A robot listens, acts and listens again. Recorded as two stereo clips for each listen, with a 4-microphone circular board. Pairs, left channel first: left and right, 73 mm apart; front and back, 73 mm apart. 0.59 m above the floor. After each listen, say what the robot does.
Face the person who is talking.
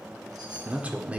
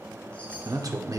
Turn 160° right.
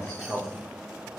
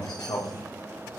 Found it: a man speaking, straight ahead, 1 to 2 m away.